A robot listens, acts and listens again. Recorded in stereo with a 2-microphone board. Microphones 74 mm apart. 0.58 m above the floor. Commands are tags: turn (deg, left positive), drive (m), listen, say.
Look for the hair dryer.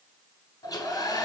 <turn deg="60"/>
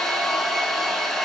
<say>Facing the hair dryer, 1 to 2 m away.</say>